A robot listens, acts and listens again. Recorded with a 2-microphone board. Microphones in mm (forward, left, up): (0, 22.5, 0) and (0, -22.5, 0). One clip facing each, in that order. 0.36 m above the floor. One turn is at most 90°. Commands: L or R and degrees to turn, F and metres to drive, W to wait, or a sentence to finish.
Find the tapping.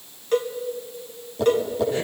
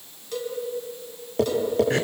R60
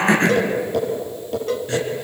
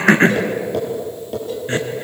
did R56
Facing the tapping.